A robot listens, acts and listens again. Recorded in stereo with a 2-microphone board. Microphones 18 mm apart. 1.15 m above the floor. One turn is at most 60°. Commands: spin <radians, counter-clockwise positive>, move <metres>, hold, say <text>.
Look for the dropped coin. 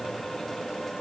hold
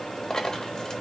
spin 0.79
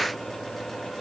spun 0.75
hold
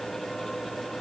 say I heard a dropped coin, but can't make it out now. It was about 5° left or 90° left.